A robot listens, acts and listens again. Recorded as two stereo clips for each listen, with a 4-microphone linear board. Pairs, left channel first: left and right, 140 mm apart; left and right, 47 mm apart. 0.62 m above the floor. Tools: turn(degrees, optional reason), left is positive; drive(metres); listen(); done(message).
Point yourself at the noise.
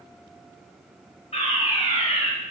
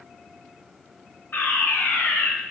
turn(degrees=45, reason="The fire alarm: about 45° left or 135° left.")
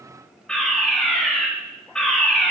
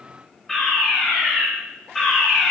done("Found it: a fire alarm, straight ahead, over 4 m away.")